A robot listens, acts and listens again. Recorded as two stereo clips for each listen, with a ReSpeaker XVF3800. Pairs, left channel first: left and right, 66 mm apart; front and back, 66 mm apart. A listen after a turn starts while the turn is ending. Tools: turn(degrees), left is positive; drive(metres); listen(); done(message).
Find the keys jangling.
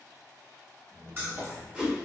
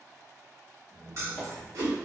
turn(degrees=-145)
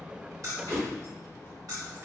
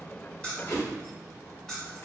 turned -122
turn(degrees=-90)
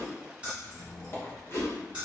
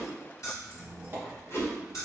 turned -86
turn(degrees=-20)
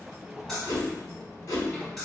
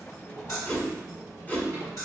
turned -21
done("Facing the keys jangling.")